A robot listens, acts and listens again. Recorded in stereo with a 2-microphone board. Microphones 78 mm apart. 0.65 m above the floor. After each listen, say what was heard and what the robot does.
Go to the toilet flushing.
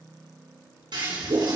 The toilet flushing: about 70° right or 110° right. Turn 70° right.
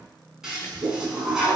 Drive 1.0 m forward.
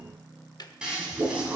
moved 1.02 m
The toilet flushing is now 10° right. Turn 10° right.
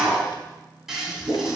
Drive 1.0 m forward.
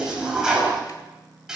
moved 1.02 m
The toilet flushing is now 10° right. Turn 10° right.
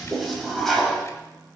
Drive 1.0 m forward.
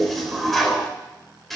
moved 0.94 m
Drive 1.0 m forward.
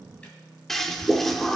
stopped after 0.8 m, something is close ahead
I am next to the toilet flushing.